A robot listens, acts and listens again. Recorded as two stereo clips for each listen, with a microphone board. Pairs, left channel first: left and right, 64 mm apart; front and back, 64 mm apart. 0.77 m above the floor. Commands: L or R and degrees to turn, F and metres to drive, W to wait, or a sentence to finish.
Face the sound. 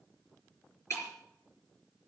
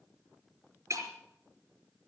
L135
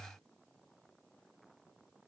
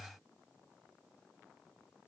Facing where the breaking glass came from. I can't hear it now.